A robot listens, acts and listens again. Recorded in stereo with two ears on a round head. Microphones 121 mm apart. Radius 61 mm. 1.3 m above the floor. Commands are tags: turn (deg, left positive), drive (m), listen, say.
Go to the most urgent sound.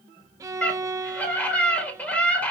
<turn deg="30"/>
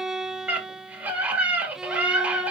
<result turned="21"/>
<turn deg="-10"/>
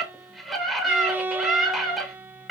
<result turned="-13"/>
<drive m="1.0"/>
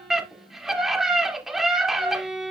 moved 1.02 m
<drive m="1.0"/>
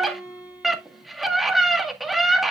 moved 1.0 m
<drive m="1.0"/>
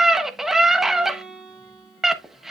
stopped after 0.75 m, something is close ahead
<say>Arrived at the scream, straight ahead.</say>